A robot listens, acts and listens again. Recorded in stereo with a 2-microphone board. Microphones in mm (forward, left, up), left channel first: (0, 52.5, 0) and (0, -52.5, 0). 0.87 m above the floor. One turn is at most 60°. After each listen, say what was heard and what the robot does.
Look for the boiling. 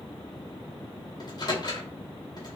Keep listening.
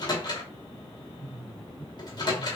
Keep listening.
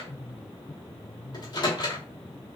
I can't make out boiling, only a microwave.